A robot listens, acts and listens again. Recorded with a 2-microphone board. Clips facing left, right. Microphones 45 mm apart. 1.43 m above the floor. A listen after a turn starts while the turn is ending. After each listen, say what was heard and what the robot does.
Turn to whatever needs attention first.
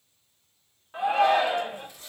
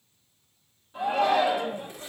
Turn 90° left.
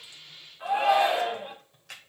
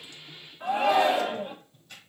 So it is at 10° left. Turn 10° left.
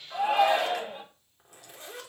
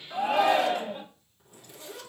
Facing the shout.